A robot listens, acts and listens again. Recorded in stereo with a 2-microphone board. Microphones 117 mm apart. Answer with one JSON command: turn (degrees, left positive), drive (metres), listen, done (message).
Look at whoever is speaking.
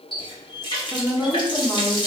{"turn": 30}
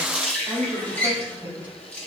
{"turn": -15}
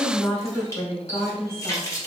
{"done": "Facing the woman speaking, 2 to 4 m away."}